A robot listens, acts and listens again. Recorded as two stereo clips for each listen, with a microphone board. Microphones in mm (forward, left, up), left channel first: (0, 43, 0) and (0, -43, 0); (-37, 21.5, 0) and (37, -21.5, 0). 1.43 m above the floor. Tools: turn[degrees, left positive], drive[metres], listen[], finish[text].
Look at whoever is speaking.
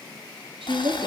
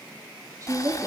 Thought: The woman speaking: 80° right.
Action: turn[-80]
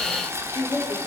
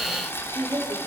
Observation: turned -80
Thought: The woman speaking is now 30° left.
Action: turn[30]
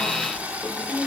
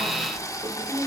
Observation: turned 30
Action: listen[]
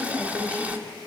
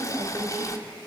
Thought: The woman speaking is now 15° left.
Action: turn[15]
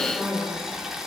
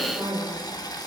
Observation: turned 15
Action: finish[Found it: a woman speaking, straight ahead.]